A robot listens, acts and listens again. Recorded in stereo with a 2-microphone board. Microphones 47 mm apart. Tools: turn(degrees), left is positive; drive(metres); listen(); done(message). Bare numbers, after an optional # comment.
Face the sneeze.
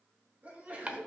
# The sneeze: about 35° right or 145° right.
turn(-35)
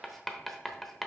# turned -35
listen()
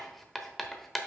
done("I heard a sneeze, but can't make it out now. It was about straight ahead or 110° right.")